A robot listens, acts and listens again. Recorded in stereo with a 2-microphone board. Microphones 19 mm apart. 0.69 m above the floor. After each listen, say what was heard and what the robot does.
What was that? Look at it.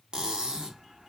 The cutlery clinking: about 50° right or 130° right. Turn 50° right.
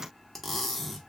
Found it: cutlery clinking, straight ahead.